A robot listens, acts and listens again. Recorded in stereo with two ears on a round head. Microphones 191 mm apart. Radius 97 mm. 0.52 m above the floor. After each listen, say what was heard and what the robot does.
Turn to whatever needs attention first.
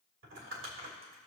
Keep listening.
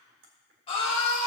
The scream: about 25° left or 155° left. Turn 25° left.
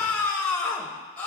Facing the scream, 1 to 2 m away.